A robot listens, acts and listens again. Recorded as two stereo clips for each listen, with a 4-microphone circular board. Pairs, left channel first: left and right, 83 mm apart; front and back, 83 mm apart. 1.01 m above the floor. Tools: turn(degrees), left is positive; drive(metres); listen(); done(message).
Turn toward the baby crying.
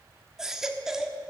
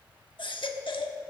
done("Facing the baby crying.")